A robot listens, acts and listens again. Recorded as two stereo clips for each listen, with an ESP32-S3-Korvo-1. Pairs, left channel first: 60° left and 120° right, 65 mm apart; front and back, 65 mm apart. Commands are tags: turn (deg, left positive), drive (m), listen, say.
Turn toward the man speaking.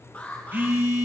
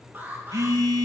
<listen/>
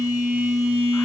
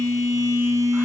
<listen/>
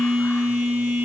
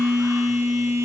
<say>I can't make out a man speaking to turn to.</say>